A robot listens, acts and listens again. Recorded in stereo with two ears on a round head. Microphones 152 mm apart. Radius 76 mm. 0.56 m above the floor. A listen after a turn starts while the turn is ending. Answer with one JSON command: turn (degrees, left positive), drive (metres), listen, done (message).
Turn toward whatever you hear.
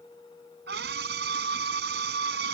{"turn": -65}
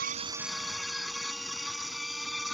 {"done": "Found it: a scream, straight ahead."}